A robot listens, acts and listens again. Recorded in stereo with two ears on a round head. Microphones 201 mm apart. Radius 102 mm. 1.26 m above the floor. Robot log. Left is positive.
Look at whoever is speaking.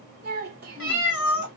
note: The child speaking: about 40° right or 140° right.
cmd yaw -40
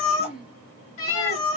end: Found it: a child speaking, straight ahead.